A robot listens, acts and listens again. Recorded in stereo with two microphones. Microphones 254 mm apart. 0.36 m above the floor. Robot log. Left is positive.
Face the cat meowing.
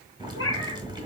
note: The cat meowing: about 65° left or 115° left.
cmd yaw +65
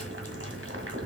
cmd idle
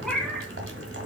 end: Found it: a cat meowing, straight ahead.